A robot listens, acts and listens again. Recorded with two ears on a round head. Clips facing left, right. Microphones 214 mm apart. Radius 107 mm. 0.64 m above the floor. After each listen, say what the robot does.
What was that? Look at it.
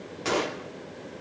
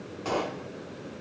Turn 30° left.
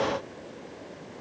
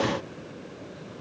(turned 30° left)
Keep listening.
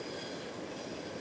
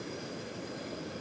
I heard a gunshot, but can't make it out now. It was about straight ahead or 120° left.